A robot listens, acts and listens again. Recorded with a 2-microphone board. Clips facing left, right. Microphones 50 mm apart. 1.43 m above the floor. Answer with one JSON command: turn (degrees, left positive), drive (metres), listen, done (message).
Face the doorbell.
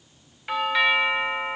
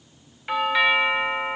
{"turn": 30}
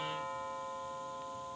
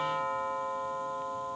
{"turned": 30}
{"turn": -30}
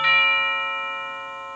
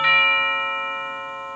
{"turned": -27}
{"done": "Facing the doorbell."}